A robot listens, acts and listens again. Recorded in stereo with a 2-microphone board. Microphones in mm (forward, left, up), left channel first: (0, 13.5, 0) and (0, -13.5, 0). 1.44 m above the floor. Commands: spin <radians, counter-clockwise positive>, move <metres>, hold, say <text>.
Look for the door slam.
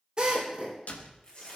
spin 1.57
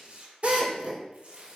say Facing where the door slam came from. I can't hear it now.